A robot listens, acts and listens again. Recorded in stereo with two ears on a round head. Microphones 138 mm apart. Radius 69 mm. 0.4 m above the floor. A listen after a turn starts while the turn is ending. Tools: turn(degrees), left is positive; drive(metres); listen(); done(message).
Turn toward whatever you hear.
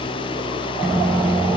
turn(degrees=30)
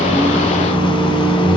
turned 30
turn(degrees=150)
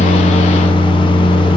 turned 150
turn(degrees=30)
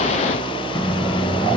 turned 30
turn(degrees=20)
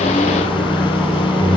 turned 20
done("Found it: a microwave, straight ahead, 2 to 4 m away.")